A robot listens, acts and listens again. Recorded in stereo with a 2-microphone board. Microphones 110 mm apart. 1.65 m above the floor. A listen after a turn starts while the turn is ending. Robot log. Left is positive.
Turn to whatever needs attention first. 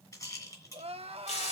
note: The crying: about 65° right or 115° right.
cmd yaw -65
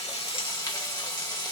cmd idle
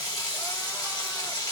cmd idle
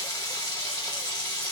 end: I heard crying, but can't make it out now. It was about straight ahead or 50° right.